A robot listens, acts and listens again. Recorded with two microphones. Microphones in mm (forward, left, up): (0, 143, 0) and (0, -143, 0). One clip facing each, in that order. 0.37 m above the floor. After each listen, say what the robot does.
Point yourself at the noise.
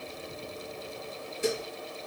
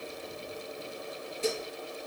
Turn 15° left.
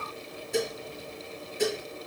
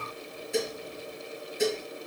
Facing the dishes clattering, over 4 m away.